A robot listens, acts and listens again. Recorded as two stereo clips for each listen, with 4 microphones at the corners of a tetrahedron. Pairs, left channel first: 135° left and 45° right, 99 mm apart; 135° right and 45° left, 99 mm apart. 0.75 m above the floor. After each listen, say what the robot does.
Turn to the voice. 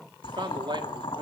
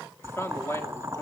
Turn 75° right.
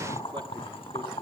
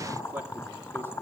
Keep listening.
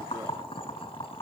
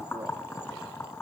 Keep listening.
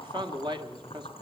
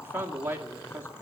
Turn 20° right.
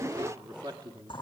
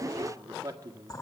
Found it: a man speaking, straight ahead.